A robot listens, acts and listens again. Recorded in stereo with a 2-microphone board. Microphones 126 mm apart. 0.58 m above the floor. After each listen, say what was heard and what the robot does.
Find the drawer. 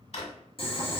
The drawer: about 60° left or 120° left. Turn 60° left.
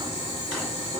Keep listening.
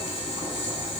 Keep listening.
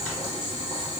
I heard a drawer, but can't make it out now. It was about straight ahead or 60° left.